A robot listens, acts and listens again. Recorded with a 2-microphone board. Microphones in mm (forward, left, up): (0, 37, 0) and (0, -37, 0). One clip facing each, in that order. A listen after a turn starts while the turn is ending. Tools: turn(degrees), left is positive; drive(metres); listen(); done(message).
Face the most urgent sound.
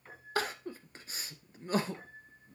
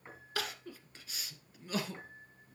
turn(degrees=35)
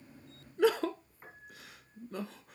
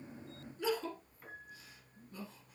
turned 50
turn(degrees=95)
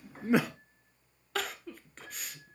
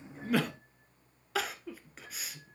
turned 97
done("Facing the crying.")